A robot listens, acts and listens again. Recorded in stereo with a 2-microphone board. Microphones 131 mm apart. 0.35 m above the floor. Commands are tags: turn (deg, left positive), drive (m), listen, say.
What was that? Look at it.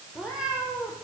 <turn deg="-30"/>
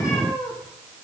<turn deg="25"/>
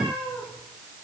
<turn deg="-10"/>
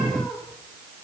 <say>Facing the cat meowing, over 4 m away.</say>